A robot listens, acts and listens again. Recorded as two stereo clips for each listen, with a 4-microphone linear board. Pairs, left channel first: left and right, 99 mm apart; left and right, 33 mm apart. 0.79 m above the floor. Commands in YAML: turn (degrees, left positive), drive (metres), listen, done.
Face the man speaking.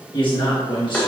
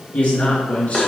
turn: 45
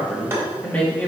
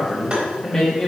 turn: 20
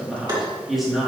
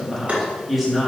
done: "Found it: a man speaking, straight ahead."